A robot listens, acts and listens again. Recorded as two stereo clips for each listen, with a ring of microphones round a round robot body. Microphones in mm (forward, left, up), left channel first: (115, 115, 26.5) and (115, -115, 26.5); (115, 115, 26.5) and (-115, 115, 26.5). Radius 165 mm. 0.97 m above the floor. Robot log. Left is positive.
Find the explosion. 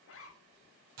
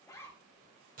cmd idle
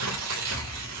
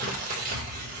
note: The explosion: 160° right.
cmd yaw -160
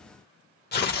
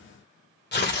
end: Facing where the explosion came from. I can't hear it now.